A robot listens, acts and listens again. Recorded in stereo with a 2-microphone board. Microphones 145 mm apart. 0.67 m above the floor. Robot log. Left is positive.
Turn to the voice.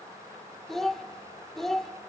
cmd yaw +30
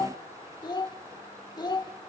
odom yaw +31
note: So it is at 150° left.
cmd yaw +150
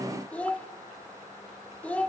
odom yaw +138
note: The child speaking is now 10° left.
cmd yaw +10
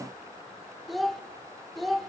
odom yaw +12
end: Found it: a child speaking, straight ahead, 1 to 2 m away.